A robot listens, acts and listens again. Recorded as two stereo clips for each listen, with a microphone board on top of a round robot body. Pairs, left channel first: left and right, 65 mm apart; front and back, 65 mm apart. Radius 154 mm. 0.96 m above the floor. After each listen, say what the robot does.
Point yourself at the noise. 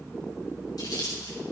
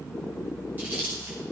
Turn 115° left.
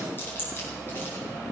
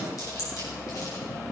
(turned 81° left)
Turn 35° left.
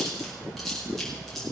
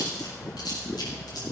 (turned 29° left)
Found it: chewing, straight ahead.